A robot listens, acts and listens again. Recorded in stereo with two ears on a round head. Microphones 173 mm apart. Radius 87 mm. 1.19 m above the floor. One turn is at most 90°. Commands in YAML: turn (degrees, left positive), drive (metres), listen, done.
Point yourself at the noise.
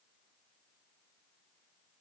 listen: true
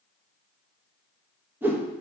turn: -30
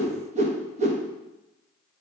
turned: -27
turn: -90
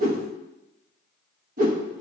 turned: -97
turn: -45
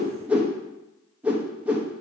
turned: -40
done: "Found it: a whoosh, straight ahead, under 1 m away."